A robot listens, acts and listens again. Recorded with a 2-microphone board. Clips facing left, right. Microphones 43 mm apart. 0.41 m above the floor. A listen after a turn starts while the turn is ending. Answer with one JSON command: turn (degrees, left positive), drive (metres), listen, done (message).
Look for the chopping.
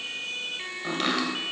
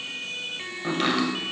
{"turn": -30}
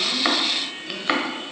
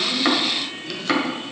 {"turn": 25}
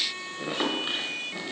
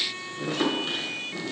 {"turn": 25}
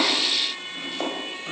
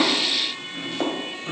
{"done": "Facing the chopping, 1 to 2 m away."}